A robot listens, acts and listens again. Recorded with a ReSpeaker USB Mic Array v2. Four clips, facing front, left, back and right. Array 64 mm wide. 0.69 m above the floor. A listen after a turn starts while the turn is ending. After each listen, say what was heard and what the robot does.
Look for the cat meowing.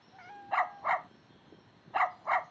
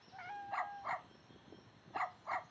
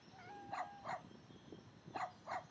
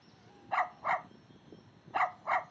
The cat meowing: 70° left. Turn 70° left.
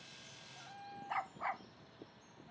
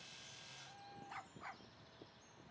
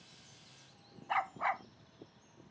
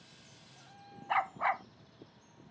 Facing the cat meowing.